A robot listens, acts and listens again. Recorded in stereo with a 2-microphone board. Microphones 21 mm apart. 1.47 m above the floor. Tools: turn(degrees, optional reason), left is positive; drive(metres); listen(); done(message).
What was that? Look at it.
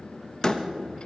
turn(degrees=35, reason="The door slam: about 35° left or 145° left.")
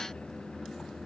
listen()
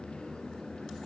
done("I heard a door slam, but can't make it out now. It was about straight ahead or 110° left.")